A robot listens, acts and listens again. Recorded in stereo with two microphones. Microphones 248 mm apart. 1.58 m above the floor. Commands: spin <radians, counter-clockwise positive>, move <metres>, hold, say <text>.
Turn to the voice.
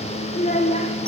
spin 0.52
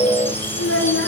spin 2.09
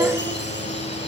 hold
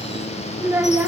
spin -0.17
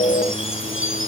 hold
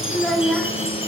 say Found it: a child speaking, straight ahead, 1 to 2 m away.